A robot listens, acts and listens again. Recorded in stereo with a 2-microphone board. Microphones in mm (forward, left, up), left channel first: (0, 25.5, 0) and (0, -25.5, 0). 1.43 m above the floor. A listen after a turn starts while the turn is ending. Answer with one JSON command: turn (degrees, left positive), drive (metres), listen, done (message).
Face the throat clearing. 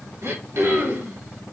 {"turn": -55}
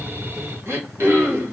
{"turn": -60}
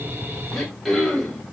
{"done": "Facing the throat clearing."}